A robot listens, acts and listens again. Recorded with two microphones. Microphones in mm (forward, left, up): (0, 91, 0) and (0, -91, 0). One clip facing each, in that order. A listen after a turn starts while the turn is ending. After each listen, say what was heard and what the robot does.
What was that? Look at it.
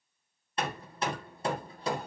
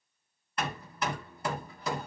The hammering: about 30° left or 150° left. Turn 30° left.
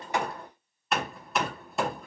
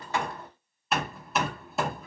Found it: hammering, straight ahead, 1 to 2 m away.